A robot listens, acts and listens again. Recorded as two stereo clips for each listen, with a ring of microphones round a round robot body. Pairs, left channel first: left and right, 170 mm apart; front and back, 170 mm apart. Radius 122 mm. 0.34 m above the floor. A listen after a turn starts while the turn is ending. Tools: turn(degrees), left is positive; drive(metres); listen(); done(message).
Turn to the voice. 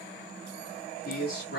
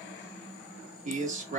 turn(degrees=135)
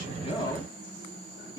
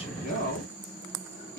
turn(degrees=25)
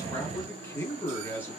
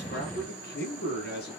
turn(degrees=10)
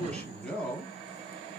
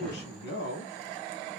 done("Found it: a man speaking, straight ahead, 2 to 4 m away.")